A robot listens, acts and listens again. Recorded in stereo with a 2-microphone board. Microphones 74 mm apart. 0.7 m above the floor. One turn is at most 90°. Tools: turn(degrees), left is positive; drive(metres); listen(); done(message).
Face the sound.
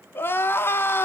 turn(degrees=30)
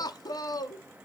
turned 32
turn(degrees=90)
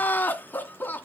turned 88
turn(degrees=25)
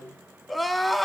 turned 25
done("Facing the crying, 1 to 2 m away.")